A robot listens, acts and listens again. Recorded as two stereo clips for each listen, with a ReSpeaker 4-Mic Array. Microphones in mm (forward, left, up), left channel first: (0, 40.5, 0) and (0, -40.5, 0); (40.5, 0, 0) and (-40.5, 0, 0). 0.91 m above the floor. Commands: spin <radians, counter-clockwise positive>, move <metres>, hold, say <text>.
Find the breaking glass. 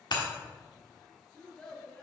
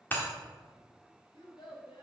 spin 1.13
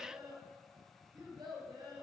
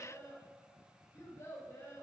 say Facing where the breaking glass came from. I can't hear it now.